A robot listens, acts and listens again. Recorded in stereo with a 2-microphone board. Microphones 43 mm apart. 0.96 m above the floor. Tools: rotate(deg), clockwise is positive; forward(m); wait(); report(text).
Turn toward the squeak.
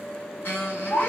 rotate(-60)
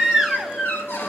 rotate(-60)
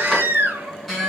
report("Found it: a squeak, straight ahead.")